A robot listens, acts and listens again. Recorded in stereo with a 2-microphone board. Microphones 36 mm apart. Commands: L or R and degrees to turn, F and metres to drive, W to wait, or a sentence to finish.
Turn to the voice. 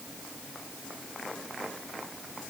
W
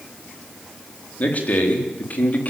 L50
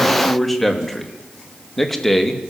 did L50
Found it: a man speaking, straight ahead, 2 to 4 m away.